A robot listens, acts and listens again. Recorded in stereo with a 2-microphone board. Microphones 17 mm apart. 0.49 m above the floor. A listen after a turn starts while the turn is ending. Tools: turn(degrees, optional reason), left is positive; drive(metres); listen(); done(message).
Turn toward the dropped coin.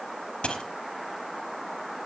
turn(degrees=90)
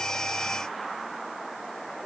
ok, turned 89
done("I heard a dropped coin from this way, but can't make it out now.")